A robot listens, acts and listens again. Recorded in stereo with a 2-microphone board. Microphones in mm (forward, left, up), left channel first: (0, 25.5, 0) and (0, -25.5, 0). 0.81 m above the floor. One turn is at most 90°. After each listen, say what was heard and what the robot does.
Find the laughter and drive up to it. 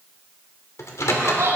Turn 90° right.
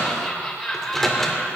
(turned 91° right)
Drive 1.0 m forward.
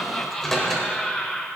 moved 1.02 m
Drive 1.0 m forward.
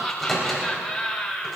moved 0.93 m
The laughter is now 10° left. Turn 10° left.
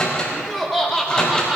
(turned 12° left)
Drive 1.0 m forward.
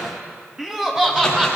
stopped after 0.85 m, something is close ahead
The laughter is now 10° right. Turn 10° right.
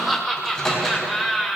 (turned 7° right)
Arrived at the laughter, straight ahead.